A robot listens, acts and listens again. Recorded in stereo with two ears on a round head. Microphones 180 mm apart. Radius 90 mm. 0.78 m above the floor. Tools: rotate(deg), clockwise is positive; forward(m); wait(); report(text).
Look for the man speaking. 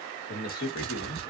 rotate(-55)
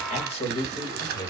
rotate(-15)
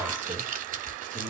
wait()
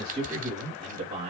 rotate(35)
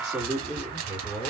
report("Facing the man speaking, 2 to 4 m away.")